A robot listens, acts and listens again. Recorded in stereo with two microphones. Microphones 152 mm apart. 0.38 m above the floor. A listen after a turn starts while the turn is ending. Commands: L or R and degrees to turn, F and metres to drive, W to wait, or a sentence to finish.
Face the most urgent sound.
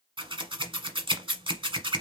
W
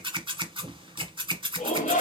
L55
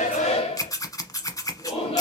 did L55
L50
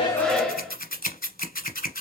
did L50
Facing the shout.